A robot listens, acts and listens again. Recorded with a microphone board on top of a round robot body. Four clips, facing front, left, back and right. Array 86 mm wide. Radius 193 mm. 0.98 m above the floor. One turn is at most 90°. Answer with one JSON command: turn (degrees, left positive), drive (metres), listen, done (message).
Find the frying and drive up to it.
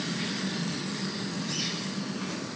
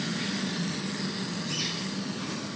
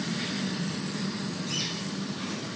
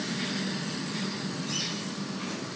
{"listen": true}
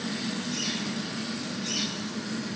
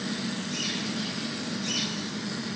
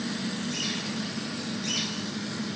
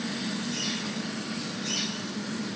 {"listen": true}
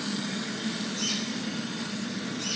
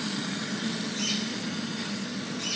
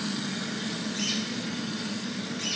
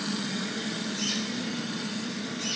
{"done": "I can't make out frying, only a bird."}